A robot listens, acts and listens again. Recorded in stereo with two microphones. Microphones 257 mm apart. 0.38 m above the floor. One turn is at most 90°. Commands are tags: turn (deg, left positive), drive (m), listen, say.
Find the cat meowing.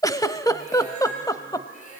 <turn deg="35"/>
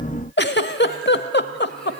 <listen/>
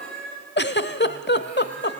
<say>Facing the cat meowing.</say>